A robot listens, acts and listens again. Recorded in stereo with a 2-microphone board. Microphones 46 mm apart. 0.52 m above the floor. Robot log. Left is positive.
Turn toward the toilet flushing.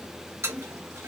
note: The toilet flushing: about 70° right or 110° right.
cmd yaw -70
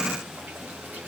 cmd idle
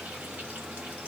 cmd idle
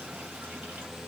end: I heard a toilet flushing, but can't make it out now. It was about straight ahead or 40° right.